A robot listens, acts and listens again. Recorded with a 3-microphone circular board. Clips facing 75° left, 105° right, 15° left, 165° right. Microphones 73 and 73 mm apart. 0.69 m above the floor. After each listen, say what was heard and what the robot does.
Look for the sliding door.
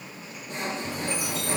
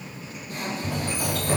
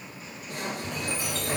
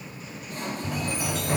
The sliding door: 80° right. Turn 80° right.
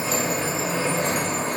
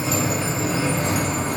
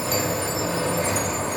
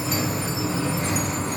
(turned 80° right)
The sliding door is now 15° left. Turn 15° left.
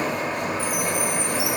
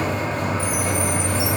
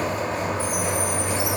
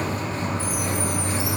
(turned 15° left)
Found it: a sliding door, straight ahead, 1 to 2 m away.